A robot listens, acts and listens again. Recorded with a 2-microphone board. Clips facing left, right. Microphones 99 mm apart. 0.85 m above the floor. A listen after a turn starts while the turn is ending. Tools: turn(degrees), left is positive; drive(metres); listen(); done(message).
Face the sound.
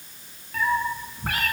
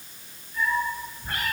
turn(degrees=90)
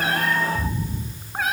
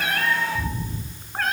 done("Found it: a cat meowing, straight ahead, 2 to 4 m away.")